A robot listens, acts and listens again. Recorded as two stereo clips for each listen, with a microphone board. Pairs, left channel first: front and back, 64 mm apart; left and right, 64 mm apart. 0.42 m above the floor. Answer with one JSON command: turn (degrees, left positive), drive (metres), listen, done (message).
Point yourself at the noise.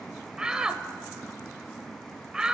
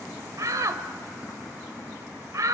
{"turn": -105}
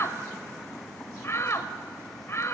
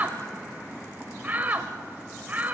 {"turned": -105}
{"turn": -30}
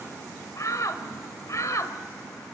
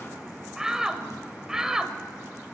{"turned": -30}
{"turn": -10}
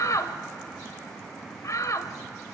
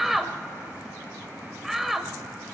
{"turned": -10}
{"done": "Facing the shout, 1 to 2 m away."}